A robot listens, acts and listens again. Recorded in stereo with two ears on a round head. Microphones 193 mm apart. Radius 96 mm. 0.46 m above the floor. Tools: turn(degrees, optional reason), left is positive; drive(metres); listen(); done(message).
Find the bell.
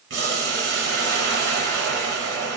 listen()
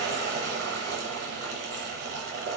listen()
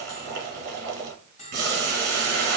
turn(degrees=35, reason="The bell: about 35° left or 145° left.")
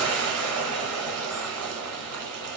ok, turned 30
listen()
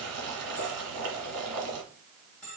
done("Found it: a bell, straight ahead, 1 to 2 m away.")